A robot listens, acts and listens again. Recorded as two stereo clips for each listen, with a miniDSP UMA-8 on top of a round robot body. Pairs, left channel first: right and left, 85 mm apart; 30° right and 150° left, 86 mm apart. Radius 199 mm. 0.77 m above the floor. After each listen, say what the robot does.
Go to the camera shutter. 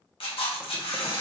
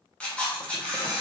Turn 110° right.
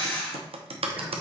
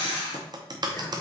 Turn 15° right.
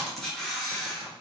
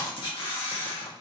Drive 1.0 m forward.
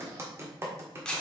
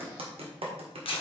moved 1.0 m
Turn 10° right.
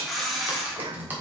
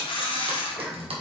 Drive 1.0 m forward.
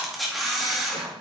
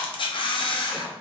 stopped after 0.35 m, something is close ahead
I am next to the camera shutter.